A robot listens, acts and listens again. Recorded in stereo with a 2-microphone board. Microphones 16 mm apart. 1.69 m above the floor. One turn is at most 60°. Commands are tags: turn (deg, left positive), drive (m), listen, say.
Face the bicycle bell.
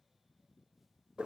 <listen/>
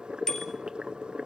<turn deg="35"/>
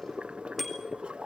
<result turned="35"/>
<say>Facing the bicycle bell, over 4 m away.</say>